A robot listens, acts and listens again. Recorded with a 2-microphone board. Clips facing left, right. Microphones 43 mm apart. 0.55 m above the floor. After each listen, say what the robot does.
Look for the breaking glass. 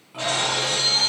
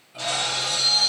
Turn 35° left.
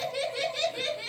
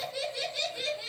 Keep listening.
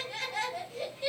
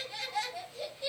I heard breaking glass, but can't make it out now. It was about straight ahead or 110° left.